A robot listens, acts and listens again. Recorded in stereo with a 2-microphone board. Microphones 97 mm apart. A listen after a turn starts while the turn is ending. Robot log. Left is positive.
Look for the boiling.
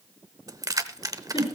cmd idle
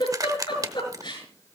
cmd idle
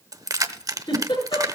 end: I can't make out boiling to turn to.